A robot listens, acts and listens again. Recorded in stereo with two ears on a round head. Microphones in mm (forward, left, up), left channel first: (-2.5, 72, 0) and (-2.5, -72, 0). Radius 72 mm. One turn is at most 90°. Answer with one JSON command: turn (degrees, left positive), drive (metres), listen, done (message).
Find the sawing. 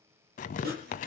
{"turn": -60}
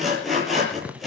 {"done": "Facing the sawing, over 4 m away."}